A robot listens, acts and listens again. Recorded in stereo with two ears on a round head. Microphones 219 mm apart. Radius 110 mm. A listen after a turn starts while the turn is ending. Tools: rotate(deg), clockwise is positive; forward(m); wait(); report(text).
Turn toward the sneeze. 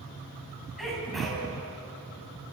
rotate(-30)
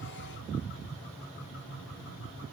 wait()
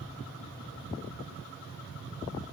report("I heard a sneeze, but can't make it out now. It was about 30° right or 150° left.")